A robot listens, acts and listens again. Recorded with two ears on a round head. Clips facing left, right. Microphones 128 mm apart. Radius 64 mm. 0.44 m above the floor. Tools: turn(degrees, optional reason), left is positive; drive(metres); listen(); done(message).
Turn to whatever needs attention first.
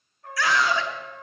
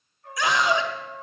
turn(degrees=-15, reason="The scream: about 15° right or 165° right.")
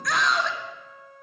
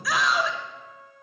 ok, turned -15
done("Facing the scream, 1 to 2 m away.")